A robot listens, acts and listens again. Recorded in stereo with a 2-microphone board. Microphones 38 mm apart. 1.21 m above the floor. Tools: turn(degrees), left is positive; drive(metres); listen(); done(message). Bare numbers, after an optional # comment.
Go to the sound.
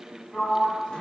# The sliding door: about 20° left or 160° left.
turn(20)
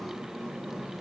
drive(1.0)
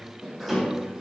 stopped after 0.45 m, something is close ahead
done("Something is in my way. I am facing the sliding door but have not reached it.")